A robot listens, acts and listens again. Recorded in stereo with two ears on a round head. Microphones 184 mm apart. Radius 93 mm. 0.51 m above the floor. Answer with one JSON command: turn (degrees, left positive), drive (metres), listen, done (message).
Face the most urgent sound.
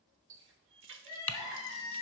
{"turn": 15}
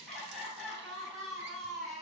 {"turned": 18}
{"done": "Facing the crying."}